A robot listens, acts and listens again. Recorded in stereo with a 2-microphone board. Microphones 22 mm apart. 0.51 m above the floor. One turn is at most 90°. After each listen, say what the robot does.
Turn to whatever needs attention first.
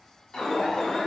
Turn 35° left.
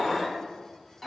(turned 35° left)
Found it: an alarm, straight ahead.